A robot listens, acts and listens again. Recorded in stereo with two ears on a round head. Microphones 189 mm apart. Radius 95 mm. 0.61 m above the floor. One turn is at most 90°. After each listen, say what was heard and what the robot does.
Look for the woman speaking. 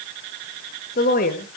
The woman speaking: about 45° left or 135° left. Turn 45° left.
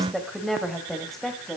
Facing the woman speaking, 2 to 4 m away.